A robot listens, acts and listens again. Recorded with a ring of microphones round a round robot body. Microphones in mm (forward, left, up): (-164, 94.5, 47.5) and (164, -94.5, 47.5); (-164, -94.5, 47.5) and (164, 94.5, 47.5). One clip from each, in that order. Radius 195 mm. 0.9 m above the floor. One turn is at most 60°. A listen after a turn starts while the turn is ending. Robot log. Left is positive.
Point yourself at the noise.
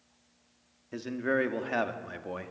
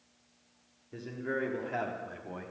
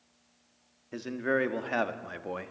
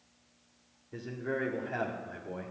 note: The man speaking: 160° right.
cmd yaw -60
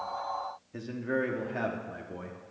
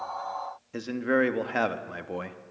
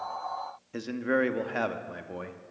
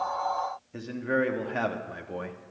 note: The man speaking is now 55° right.
cmd yaw -55
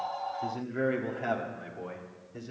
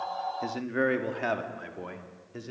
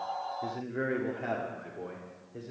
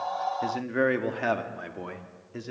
note: The man speaking is now 35° left.
cmd yaw +35
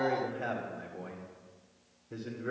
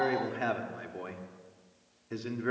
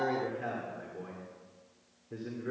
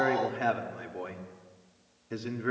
end: Found it: a man speaking, straight ahead, 1 to 2 m away.